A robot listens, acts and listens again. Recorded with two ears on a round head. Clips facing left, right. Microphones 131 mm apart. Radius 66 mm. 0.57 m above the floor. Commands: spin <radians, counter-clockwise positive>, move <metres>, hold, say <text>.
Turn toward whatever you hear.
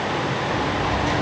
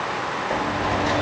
spin -0.52
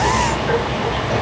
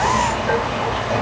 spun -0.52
say Facing the sliding door, 1 to 2 m away.